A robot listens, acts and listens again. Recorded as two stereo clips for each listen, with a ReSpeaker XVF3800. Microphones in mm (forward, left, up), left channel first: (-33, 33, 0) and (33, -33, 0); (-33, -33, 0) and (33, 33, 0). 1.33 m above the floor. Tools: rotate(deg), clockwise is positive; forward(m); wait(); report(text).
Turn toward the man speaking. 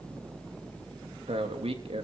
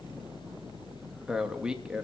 rotate(35)
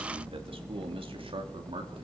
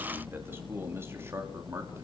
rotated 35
rotate(20)
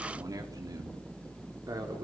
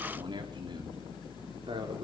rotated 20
rotate(-10)
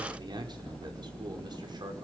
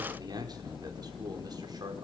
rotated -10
report("Found it: a man speaking, straight ahead, over 4 m away.")